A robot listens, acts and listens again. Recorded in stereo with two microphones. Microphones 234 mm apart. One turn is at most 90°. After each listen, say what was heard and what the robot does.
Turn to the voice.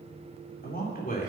The man speaking: about 35° left or 145° left. Turn 35° left.
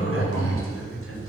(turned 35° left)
Keep listening.
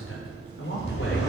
So it is at 125° left. Turn 90° left.
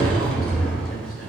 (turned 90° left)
Nothing new. It was at 35° left. Turn 35° left.
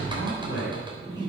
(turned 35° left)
The man speaking is now 50° left. Turn 50° left.
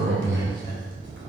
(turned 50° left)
Keep listening.
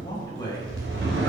The man speaking is now 15° left. Turn 15° left.
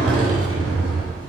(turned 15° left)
Keep listening.
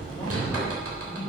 Keep listening.
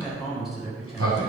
Facing the man speaking.